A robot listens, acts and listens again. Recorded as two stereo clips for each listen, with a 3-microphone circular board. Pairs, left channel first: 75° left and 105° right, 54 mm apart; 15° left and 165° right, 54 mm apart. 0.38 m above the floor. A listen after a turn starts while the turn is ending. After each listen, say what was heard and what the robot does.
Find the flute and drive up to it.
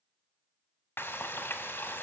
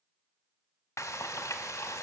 Keep listening.
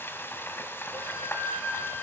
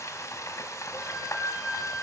The flute: 90° right. Turn 90° right.
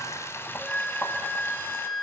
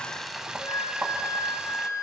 Drive 1.0 m forward.
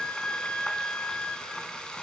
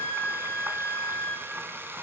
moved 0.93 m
Drive 1.0 m forward.
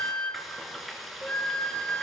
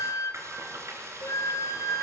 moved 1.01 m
Drive 1.0 m forward.
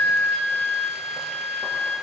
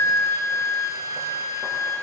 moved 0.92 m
The flute is now 20° left. Turn 20° left.
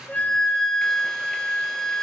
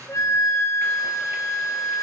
Drive 1.0 m forward.
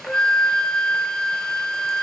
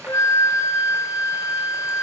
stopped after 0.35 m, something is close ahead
Arrived at the flute, straight ahead.